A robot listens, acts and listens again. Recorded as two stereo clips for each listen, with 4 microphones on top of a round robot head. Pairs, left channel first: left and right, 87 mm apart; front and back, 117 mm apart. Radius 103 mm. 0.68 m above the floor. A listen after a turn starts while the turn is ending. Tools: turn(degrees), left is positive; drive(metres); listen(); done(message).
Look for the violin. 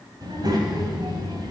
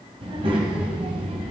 listen()
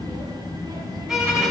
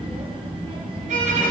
turn(degrees=-175)
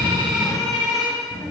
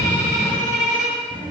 done("Facing the violin, 2 to 4 m away.")